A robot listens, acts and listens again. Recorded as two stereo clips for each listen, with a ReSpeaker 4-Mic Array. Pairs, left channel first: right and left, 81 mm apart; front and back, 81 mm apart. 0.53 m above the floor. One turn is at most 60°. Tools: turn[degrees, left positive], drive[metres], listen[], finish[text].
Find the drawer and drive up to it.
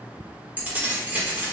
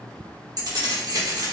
Action: listen[]
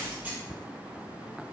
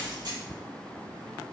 Action: listen[]
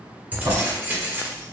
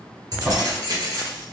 Thought: The drawer: 95° left.
Action: turn[60]
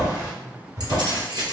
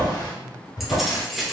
Thought: The drawer is now 30° left.
Action: turn[30]
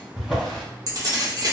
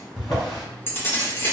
Action: drive[1.0]
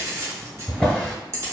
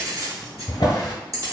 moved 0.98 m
Thought: The drawer is now 10° right.
Action: turn[-10]
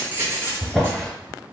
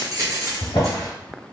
Action: drive[1.0]
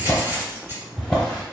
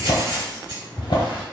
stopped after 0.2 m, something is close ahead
Thought: The drawer is now 10° right.
Action: turn[-10]
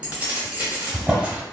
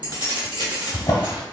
Action: finish[Arrived at the drawer, straight ahead.]